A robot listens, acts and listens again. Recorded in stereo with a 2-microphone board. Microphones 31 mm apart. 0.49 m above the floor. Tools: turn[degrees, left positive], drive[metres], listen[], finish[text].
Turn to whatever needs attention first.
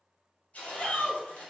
Thought: The shout: about 55° left or 125° left.
Action: turn[55]
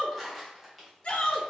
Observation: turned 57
Thought: So it is at 50° left.
Action: turn[50]
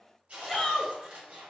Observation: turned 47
Action: finish[Facing the shout, 1 to 2 m away.]